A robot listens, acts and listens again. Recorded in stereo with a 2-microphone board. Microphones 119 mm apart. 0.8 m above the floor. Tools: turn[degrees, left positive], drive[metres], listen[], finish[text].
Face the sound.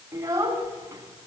Thought: The child speaking: about 25° right or 155° right.
Action: turn[-25]
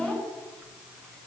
Action: finish[Facing the child speaking, over 4 m away.]